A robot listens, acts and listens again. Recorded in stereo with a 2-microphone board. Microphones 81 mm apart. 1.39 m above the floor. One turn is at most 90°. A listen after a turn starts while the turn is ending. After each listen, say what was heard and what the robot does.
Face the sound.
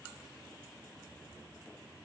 Keep listening.
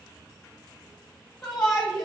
Turn 30° left.
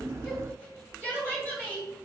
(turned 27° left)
So it is at 20° right. Turn 20° right.
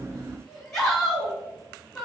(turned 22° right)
Found it: a shout, straight ahead, 2 to 4 m away.